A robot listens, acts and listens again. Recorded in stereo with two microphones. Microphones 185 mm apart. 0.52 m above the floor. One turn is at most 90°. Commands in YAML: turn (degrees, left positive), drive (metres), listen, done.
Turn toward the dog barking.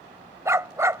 turn: -30
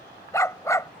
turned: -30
turn: 15
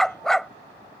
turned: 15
done: "Facing the dog barking."